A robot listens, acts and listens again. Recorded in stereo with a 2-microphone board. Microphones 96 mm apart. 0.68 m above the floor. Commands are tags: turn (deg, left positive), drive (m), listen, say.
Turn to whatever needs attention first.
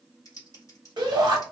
<turn deg="-50"/>
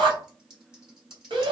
<turn deg="-70"/>
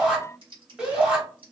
<turn deg="-10"/>
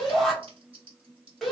<say>Found it: a shout, straight ahead.</say>